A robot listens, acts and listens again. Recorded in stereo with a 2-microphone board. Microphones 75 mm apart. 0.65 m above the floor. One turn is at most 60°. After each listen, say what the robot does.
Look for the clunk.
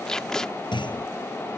Turn 60° left.
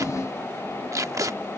Turn 30° left.
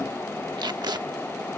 Facing where the clunk came from. I can't hear it now.